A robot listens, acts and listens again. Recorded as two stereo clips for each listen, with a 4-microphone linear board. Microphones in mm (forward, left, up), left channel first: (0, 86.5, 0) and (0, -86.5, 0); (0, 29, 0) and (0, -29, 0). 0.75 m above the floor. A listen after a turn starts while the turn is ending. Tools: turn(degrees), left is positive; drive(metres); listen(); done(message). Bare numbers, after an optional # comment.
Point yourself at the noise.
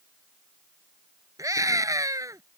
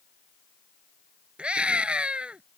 # The scream: about 20° right or 160° right.
turn(-20)
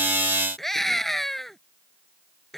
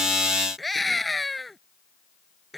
done("Facing the scream.")